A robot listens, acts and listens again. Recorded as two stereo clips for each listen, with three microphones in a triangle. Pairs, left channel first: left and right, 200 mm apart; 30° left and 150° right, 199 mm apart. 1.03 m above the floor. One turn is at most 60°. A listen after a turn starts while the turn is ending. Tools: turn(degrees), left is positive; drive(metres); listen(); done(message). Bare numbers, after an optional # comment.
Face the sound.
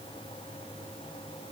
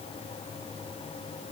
listen()
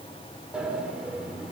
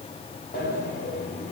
done("Facing the sliding door.")